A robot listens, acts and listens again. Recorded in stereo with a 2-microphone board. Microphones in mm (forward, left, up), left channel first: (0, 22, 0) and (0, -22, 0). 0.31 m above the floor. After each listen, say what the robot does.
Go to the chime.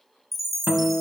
Turn 30° left.
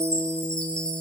Turn 155° left.
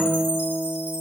Keep listening.
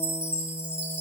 Turn 40° right.
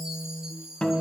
Turn 15° right.
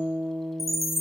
Drive 1.0 m forward.
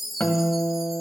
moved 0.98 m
Drive 1.0 m forward.
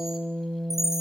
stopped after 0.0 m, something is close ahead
Turn 15° right.
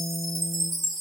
I am next to the chime.